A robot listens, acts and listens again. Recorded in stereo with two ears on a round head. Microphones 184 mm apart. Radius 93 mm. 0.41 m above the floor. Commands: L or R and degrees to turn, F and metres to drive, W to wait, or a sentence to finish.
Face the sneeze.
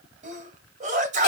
R40
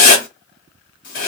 W
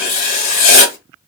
I heard a sneeze, but can't make it out now. It was about straight ahead or 100° right.